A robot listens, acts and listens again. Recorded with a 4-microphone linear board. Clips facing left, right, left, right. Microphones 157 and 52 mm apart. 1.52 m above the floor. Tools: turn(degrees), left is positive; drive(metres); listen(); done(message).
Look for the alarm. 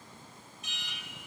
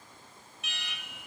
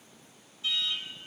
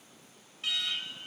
turn(degrees=-70)
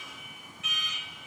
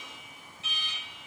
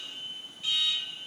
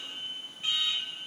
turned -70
turn(degrees=-35)
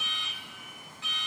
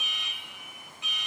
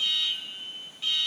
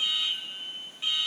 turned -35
turn(degrees=-20)
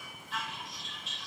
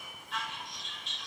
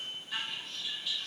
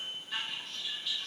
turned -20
done("Facing the alarm, 1 to 2 m away.")